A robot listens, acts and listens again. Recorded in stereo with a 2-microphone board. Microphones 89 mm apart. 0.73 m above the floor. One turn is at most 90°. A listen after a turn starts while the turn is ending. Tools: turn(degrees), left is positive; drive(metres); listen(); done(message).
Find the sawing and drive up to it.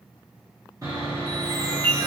turn(degrees=-35)
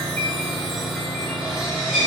drive(metres=1.0)
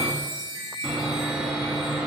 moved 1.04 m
turn(degrees=-15)
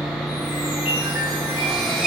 drive(metres=1.0)
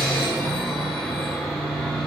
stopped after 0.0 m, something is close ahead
done("Arrived at the sawing, straight ahead.")